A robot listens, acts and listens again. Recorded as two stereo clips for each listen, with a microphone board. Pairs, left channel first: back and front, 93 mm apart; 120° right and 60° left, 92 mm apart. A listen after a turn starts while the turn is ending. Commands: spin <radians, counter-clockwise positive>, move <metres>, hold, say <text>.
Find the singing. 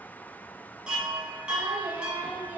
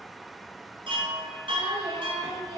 spin 1.22
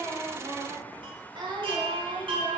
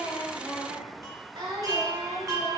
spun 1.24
spin 0.70
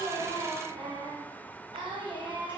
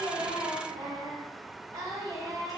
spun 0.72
spin 0.26
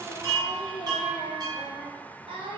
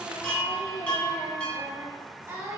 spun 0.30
say Facing the singing.